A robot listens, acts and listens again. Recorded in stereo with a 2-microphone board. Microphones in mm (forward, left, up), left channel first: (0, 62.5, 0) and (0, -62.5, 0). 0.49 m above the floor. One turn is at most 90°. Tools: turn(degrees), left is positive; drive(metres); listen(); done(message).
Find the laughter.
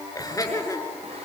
turn(degrees=25)
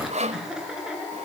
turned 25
turn(degrees=-10)
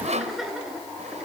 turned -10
done("Facing the laughter, over 4 m away.")